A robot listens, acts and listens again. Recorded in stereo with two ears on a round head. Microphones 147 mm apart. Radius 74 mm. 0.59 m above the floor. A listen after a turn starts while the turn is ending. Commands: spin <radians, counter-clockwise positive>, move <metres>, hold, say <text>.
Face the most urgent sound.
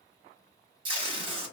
hold
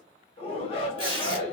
spin 0.61
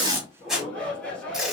spin 0.17
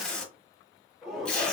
say Facing the shout, 1 to 2 m away.